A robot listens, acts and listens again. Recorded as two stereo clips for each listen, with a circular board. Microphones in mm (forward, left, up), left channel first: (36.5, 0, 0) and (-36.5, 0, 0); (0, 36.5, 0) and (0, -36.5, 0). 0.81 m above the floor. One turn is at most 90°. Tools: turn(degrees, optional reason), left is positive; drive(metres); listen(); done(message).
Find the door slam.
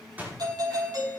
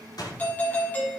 turn(degrees=90, reason="The door slam: 115° left.")
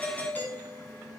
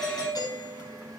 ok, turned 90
turn(degrees=25, reason="Nothing new. It was at 25° left.")
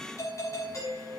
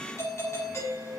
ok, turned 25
done("I heard a door slam from this way, but can't make it out now.")